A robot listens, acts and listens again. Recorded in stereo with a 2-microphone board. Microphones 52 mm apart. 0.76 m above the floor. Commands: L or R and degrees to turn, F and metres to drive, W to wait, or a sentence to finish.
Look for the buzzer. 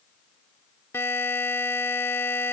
L55
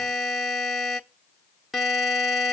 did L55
Facing the buzzer, under 1 m away.